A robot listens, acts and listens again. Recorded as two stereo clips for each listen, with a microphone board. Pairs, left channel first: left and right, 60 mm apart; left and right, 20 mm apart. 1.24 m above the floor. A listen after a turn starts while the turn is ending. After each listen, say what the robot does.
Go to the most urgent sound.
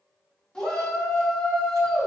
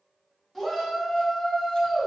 Turn 30° left.
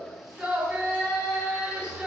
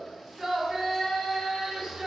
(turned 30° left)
Turn 15° right.
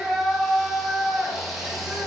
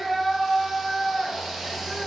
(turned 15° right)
Drive 1.0 m forward.
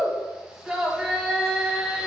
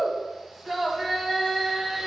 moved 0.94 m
Turn 10° right.
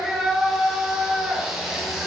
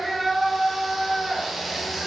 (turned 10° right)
Drive 1.0 m forward.
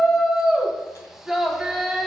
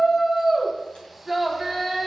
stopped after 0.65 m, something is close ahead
I am next to the shout.